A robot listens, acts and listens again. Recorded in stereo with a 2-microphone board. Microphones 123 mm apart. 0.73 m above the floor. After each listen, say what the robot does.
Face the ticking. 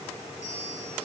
Keep listening.
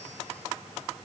Keep listening.
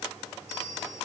I can't make out ticking to turn to.